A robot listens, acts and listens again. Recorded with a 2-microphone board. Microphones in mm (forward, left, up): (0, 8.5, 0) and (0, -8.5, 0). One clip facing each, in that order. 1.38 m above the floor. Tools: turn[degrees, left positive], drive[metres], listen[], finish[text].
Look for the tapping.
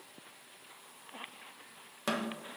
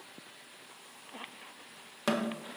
Action: turn[-30]
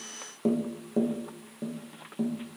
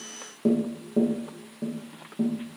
Thought: So it is at 15° left.
Action: turn[15]
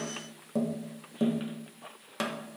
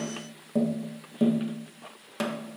Action: finish[Found it: tapping, straight ahead, 1 to 2 m away.]